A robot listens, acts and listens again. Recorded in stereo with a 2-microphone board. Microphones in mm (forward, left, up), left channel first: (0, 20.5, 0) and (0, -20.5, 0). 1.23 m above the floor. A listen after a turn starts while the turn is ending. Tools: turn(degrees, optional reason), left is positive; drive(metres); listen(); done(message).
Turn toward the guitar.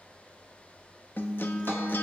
turn(degrees=60, reason="The guitar: about 60° left or 120° left.")
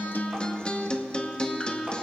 turn(degrees=30, reason="So it is at 30° left.")
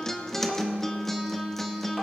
turn(degrees=10, reason="The guitar is now 10° left.")
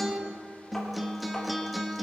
done("Facing the guitar.")